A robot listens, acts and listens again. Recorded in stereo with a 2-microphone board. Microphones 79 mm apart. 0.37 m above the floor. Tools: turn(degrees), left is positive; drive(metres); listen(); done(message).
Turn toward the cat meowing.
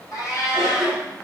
turn(degrees=55)
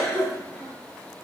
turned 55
listen()
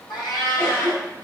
turn(degrees=70)
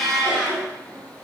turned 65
done("Facing the cat meowing.")